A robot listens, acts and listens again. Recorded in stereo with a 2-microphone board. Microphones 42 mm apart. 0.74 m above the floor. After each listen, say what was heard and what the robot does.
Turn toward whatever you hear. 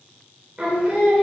The singing: about 15° right or 165° right. Turn 15° right.
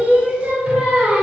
The singing: about 30° right or 150° right. Turn 30° right.
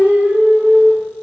So it is at 125° right. Turn 125° right.
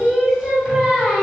Found it: singing, straight ahead.